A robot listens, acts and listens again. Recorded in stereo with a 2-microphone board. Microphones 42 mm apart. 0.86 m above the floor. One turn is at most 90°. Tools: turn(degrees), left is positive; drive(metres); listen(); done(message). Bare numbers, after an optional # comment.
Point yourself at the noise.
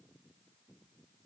listen()
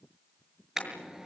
turn(-30)
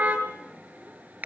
# So it is at 140° right.
turn(-90)
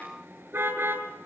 # The car horn is now 65° right.
turn(-65)
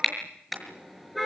done("Found it: a car horn, straight ahead.")